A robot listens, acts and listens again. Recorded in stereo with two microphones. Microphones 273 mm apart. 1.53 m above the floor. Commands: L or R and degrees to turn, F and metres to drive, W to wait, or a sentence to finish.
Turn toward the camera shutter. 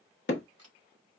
R70
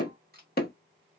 R35
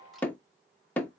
W
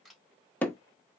Facing the camera shutter, 1 to 2 m away.